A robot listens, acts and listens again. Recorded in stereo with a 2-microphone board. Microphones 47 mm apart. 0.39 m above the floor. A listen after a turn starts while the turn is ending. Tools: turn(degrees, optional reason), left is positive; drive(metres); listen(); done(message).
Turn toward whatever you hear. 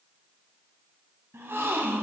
turn(degrees=-55, reason="The gasp: about 55° right or 125° right.")
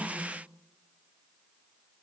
listen()
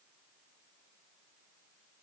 done("I heard a gasp, but can't make it out now. It was about straight ahead or 70° right.")